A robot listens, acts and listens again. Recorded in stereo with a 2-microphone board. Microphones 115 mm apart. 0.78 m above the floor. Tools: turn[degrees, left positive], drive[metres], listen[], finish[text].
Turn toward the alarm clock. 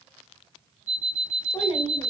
Action: turn[-90]
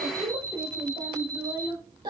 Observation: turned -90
Thought: So it is at 10° left.
Action: turn[10]
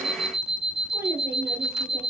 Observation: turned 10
Action: finish[Found it: an alarm clock, straight ahead.]